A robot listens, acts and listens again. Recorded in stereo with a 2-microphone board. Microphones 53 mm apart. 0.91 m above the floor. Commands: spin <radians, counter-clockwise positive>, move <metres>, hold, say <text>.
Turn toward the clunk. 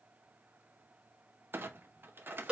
spin -0.79
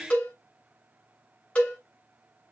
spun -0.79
hold
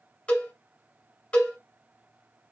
say I heard a clunk, but can't make it out now. It was about straight ahead or 90° right.